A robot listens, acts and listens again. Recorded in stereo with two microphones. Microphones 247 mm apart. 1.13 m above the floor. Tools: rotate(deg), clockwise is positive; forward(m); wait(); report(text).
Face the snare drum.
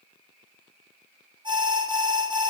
wait()
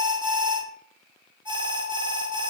wait()
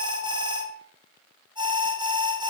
report("I can't make out a snare drum, only an alarm.")